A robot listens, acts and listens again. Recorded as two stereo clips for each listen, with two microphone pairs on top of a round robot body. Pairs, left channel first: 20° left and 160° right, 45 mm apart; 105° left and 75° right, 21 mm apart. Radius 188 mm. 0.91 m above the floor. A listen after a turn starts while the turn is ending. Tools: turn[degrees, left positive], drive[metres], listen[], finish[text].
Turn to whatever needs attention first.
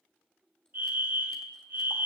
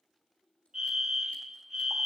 Thought: The fire alarm: 130° right.
Action: turn[-130]
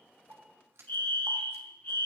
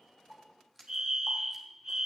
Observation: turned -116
Thought: The fire alarm is now 10° right.
Action: turn[-10]
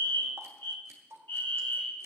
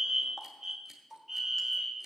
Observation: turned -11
Action: finish[Facing the fire alarm, 2 to 4 m away.]